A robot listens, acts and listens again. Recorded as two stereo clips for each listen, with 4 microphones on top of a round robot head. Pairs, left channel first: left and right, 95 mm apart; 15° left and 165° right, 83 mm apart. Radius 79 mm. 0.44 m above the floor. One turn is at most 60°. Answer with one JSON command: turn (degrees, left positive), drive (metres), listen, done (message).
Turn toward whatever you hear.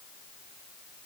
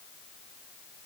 {"listen": true}
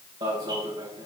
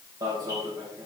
{"turn": -60}
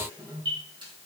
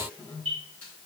{"turn": -60}
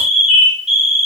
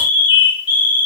{"turn": -10}
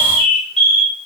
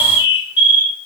{"done": "Found it: an alarm, straight ahead."}